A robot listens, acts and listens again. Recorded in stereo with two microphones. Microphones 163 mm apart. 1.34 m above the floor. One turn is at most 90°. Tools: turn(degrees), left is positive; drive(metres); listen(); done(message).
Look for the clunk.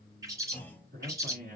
turn(degrees=30)
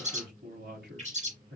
listen()
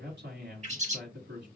done("I heard a clunk, but can't make it out now. It was about 20° right or 140° left.")